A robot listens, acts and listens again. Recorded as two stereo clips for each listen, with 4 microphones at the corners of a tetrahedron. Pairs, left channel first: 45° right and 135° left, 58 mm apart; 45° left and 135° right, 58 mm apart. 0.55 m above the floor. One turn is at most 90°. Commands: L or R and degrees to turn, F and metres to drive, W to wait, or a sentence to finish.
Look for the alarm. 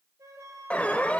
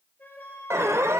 R90
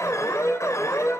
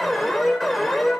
R45
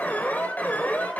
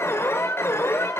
L10
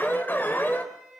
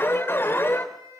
Found it: an alarm, straight ahead.